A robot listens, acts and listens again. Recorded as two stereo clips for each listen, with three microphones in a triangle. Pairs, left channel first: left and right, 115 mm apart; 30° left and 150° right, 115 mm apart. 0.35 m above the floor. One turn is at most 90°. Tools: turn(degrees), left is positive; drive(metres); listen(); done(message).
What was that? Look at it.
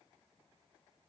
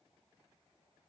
listen()
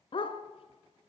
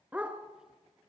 turn(degrees=90)
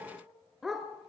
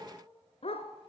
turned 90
done("Facing the dog barking, 1 to 2 m away.")